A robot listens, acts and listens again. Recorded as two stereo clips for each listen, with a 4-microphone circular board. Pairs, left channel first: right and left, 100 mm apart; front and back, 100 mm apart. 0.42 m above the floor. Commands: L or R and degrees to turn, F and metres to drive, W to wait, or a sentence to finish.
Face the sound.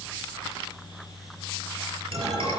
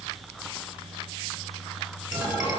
L100
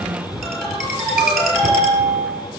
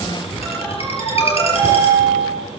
Found it: a ringtone, straight ahead, over 4 m away.